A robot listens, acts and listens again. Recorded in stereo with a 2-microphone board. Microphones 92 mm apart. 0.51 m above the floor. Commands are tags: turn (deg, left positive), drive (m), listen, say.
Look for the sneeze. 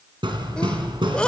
<turn deg="30"/>
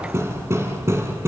<listen/>
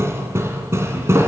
<say>I heard a sneeze, but can't make it out now. It was about 20° right or 140° left.</say>